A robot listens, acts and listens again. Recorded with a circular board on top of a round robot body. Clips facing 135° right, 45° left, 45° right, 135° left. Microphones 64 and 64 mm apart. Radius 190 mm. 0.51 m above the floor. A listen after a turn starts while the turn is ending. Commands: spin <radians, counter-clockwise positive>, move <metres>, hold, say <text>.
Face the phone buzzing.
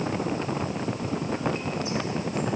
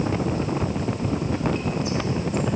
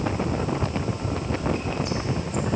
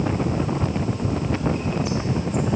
hold
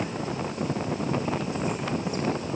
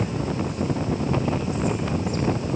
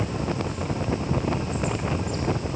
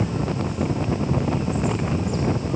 hold
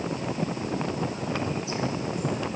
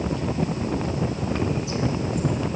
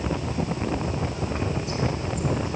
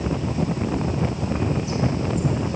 say I can't make out a phone buzzing.